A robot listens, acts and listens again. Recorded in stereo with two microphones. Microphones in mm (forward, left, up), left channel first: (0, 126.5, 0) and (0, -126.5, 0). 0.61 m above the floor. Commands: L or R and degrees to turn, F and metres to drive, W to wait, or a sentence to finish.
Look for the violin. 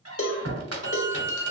R45
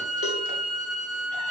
Facing the violin, 1 to 2 m away.